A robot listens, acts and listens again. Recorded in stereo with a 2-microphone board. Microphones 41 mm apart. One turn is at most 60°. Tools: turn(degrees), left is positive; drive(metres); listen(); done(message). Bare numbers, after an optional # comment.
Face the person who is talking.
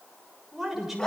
turn(-30)
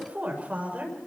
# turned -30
# So it is at 140° right.
turn(-60)
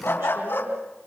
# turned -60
# Nothing new. It was at 80° right.
turn(-60)
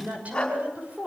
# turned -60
# The woman speaking is now 35° right.
turn(-35)
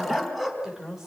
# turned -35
# The woman speaking is now 10° right.
turn(-10)
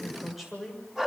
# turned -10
done("Facing the woman speaking, over 4 m away.")